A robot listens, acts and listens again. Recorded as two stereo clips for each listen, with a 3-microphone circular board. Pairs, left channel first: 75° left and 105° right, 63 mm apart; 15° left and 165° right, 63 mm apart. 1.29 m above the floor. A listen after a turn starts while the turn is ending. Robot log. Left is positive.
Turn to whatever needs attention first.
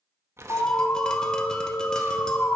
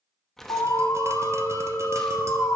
note: The alarm: 25° left.
cmd yaw +25
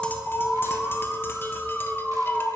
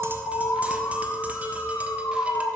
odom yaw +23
end: Found it: an alarm, straight ahead, under 1 m away.